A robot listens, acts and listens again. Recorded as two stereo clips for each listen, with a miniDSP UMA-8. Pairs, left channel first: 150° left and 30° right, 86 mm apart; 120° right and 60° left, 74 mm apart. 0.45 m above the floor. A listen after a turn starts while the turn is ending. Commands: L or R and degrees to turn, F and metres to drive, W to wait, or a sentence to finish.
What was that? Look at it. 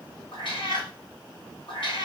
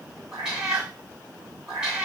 L140
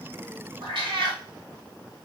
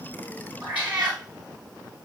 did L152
R10
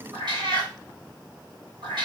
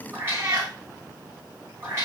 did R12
Facing the cat meowing.